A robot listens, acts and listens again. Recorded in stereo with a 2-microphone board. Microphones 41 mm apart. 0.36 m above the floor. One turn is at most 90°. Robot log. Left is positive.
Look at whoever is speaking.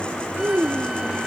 cmd yaw -90
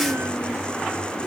cmd idle
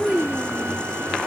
end: Facing the child speaking.